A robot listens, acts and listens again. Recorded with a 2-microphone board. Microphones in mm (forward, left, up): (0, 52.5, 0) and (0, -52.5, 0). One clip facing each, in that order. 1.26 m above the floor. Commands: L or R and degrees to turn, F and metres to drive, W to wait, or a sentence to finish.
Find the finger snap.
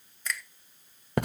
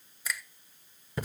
R30
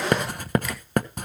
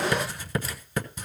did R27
W
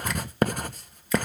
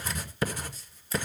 W
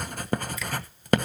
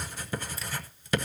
I heard a finger snap, but can't make it out now. It was about 20° left or 145° right.